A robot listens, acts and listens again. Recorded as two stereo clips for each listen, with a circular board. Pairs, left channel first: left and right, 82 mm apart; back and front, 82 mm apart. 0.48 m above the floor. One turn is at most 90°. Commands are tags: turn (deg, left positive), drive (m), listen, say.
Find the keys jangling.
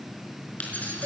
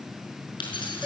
<turn deg="90"/>
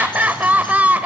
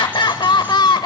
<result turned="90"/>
<turn deg="70"/>
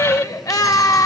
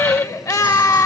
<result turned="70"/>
<listen/>
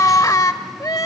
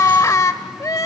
<say>Facing where the keys jangling came from. I can't hear it now.</say>